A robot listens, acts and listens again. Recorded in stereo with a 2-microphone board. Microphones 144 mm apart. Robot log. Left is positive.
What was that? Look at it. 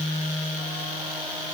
cmd idle
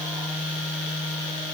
cmd idle
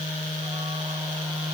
end: I can't make out anything.